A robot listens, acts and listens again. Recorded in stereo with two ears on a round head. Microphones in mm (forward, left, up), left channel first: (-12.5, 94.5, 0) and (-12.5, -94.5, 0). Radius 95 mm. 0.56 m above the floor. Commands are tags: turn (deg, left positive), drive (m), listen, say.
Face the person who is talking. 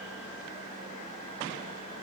<listen/>
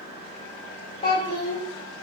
<turn deg="25"/>
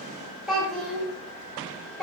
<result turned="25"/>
<say>Found it: a child speaking, straight ahead, 1 to 2 m away.</say>